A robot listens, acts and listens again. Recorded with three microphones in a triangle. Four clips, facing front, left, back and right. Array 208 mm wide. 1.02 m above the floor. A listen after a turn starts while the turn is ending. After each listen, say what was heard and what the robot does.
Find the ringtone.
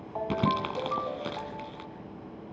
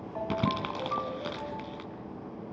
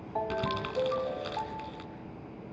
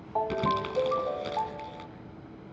The ringtone: 105° right. Turn 105° right.
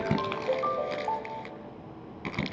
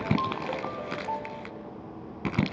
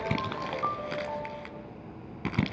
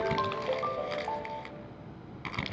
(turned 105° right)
The ringtone is now 15° right. Turn 15° right.
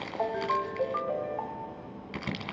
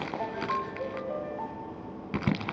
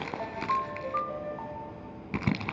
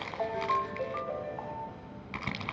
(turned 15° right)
Found it: a ringtone, straight ahead.